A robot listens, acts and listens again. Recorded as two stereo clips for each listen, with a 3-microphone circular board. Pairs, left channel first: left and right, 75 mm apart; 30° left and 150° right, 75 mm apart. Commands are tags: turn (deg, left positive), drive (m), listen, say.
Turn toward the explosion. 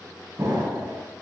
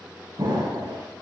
<turn deg="-130"/>
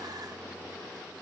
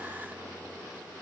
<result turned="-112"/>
<turn deg="-15"/>
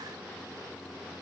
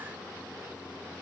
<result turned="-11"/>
<say>I heard an explosion from this way, but can't make it out now.</say>